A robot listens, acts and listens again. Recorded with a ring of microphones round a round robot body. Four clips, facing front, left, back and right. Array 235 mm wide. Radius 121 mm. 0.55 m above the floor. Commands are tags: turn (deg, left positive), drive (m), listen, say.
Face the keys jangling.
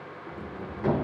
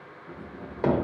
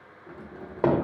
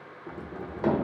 <turn deg="-70"/>
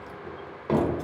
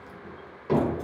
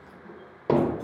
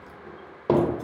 <listen/>
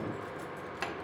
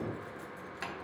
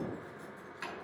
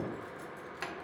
<say>Facing the keys jangling, 1 to 2 m away.</say>